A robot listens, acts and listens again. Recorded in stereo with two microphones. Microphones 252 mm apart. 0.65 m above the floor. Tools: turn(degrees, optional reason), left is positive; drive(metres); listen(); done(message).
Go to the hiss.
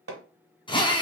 listen()
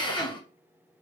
listen()
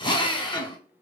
done("I can't make out a hiss, only a drill and hammering.")